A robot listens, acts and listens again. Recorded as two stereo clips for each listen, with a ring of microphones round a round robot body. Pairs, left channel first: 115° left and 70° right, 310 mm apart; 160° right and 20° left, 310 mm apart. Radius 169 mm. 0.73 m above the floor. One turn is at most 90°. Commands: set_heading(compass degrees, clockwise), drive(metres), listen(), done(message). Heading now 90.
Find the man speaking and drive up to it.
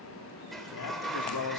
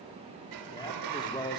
set_heading(0)
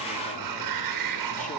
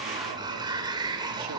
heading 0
set_heading(325)
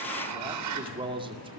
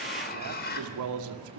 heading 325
drive(1.0)
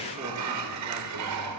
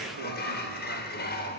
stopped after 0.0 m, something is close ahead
listen()
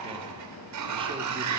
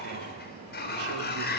listen()
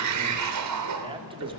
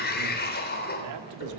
done("Something is in my way. I am facing the man speaking but have not reached it.")